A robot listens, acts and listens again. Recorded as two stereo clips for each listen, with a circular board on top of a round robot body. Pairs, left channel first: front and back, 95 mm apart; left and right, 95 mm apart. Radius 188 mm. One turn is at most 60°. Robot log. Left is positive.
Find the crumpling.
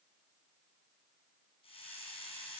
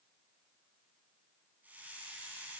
cmd idle
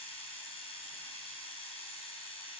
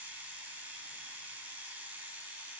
cmd idle
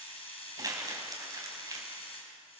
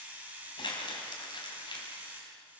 note: The crumpling: 130° left.
cmd yaw +60
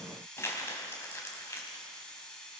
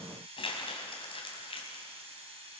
note: The crumpling is now 65° left.
cmd yaw +60
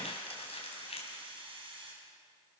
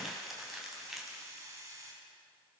end: Facing the crumpling.